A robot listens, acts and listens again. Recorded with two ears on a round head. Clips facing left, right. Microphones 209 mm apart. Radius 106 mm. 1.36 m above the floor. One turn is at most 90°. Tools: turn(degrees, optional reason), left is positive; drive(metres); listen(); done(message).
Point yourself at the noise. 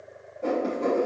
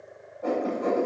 turn(degrees=40, reason="The writing: about 40° left or 140° left.")
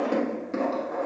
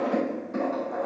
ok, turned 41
turn(degrees=90, reason="So it is at 100° left.")
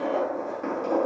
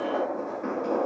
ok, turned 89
turn(degrees=10, reason="The writing is now 10° left.")
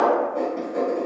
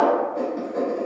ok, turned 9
done("Found it: writing, straight ahead, 1 to 2 m away.")